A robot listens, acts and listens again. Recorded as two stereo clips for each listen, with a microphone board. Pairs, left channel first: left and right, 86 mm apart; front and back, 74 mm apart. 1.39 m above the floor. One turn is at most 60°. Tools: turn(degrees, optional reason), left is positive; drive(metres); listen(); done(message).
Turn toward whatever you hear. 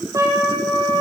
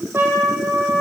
turn(degrees=-60, reason="The trumpet: 130° right.")
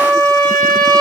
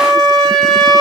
turn(degrees=-60, reason="The trumpet is now 85° right.")
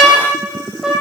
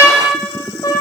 turn(degrees=-10, reason="The trumpet is now 10° right.")
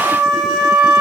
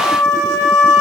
done("Facing the trumpet, 2 to 4 m away.")